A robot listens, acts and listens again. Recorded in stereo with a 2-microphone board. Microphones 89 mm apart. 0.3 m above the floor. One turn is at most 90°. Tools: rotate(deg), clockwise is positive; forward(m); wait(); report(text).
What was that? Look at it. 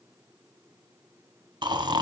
rotate(60)
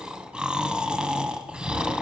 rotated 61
rotate(10)
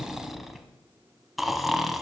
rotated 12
report("Found it: snoring, straight ahead.")